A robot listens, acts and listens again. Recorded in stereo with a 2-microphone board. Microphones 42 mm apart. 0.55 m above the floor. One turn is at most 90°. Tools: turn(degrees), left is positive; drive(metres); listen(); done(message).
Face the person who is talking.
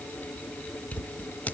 listen()
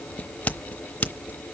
listen()
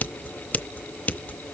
done("I can't make out anyone speaking, only scissors.")